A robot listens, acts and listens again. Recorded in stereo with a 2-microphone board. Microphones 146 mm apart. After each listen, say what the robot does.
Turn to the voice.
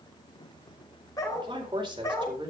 Turn 35° right.
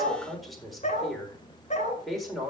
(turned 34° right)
Facing the man speaking, over 4 m away.